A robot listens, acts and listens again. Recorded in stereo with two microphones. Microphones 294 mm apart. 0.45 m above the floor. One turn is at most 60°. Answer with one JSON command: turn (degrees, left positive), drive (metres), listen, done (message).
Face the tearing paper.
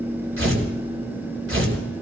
{"turn": -45}
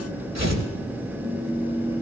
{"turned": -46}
{"turn": -60}
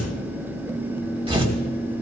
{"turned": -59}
{"turn": -20}
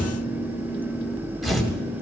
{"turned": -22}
{"done": "Facing the tearing paper, 2 to 4 m away."}